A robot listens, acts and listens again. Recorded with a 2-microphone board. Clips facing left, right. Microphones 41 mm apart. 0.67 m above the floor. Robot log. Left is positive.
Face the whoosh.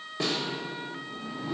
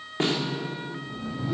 cmd yaw -30
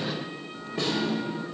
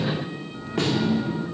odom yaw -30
note: So it is at 150° right.
cmd yaw -150
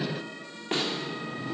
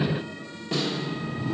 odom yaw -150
end: Facing the whoosh, 2 to 4 m away.